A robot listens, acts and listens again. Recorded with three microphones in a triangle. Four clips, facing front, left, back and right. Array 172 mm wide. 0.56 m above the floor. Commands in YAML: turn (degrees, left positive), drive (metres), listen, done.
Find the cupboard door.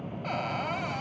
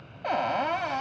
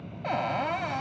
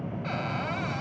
turn: 115
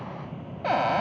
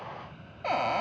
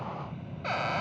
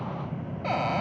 done: "Found it: a cupboard door, straight ahead, 1 to 2 m away."